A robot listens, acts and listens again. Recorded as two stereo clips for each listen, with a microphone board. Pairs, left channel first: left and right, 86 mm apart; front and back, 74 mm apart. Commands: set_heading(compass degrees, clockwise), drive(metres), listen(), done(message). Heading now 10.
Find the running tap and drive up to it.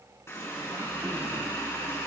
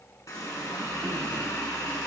set_heading(335)
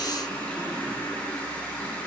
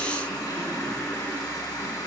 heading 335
set_heading(320)
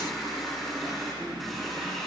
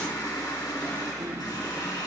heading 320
drive(1.0)
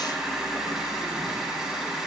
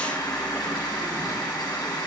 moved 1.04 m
set_heading(330)
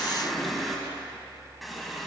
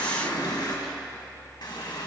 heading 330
drive(1.0)
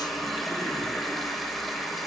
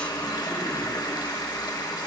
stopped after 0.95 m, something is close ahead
done("Arrived at the running tap, straight ahead.")